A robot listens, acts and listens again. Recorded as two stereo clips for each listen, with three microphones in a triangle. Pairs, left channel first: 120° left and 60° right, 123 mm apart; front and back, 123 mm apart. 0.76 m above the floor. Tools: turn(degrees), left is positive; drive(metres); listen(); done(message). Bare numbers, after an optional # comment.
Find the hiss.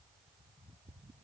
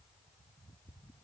listen()
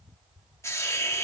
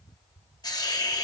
# The hiss: 55° left.
turn(55)
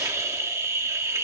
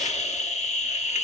done("Facing the hiss, 1 to 2 m away.")